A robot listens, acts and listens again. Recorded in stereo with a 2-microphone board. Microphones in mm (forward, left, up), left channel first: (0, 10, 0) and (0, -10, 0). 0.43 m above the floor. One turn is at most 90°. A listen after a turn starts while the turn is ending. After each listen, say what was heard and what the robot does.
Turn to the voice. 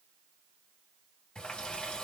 Keep listening.
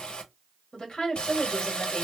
The woman speaking: about 45° left or 135° left. Turn 45° left.
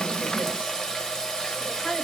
So it is at 80° left. Turn 80° left.
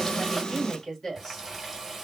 The woman speaking is now 30° left. Turn 30° left.
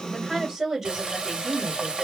The woman speaking is now 15° right. Turn 15° right.
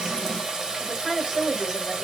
Found it: a woman speaking, straight ahead.